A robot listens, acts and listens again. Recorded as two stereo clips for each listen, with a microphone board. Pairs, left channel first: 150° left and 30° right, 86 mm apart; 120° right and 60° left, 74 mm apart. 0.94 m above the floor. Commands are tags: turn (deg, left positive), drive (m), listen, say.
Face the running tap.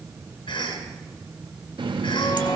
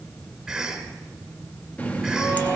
<turn deg="-50"/>
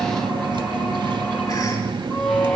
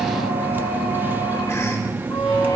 <say>Found it: a running tap, straight ahead, under 1 m away.</say>